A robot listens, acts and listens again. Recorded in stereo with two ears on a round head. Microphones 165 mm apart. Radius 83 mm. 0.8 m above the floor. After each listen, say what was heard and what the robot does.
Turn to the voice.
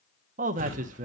The man speaking: about 40° right or 140° right. Turn 40° right.
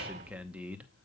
So it is at 10° right. Turn 10° right.
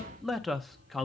Facing the man speaking, under 1 m away.